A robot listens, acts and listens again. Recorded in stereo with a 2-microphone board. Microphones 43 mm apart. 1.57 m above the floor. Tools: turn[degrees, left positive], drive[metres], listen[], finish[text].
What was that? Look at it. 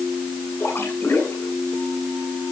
Thought: The splash: about 75° left or 105° left.
Action: turn[75]
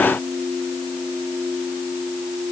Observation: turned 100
Action: listen[]
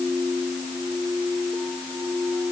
Action: finish[I heard a splash, but can't make it out now. It was about 5° left or 25° right.]